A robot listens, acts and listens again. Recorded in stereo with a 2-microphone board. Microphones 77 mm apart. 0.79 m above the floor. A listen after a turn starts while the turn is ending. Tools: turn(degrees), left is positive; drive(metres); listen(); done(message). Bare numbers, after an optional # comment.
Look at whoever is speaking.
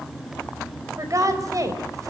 # The woman speaking: about 50° right or 130° right.
turn(-50)
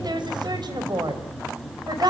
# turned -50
# So it is at 65° right.
turn(-65)
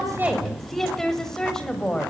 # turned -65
# The woman speaking is now 10° left.
turn(10)
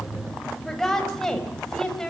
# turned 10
# The woman speaking is now 10° left.
turn(10)
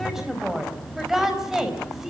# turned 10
done("Found it: a woman speaking, straight ahead.")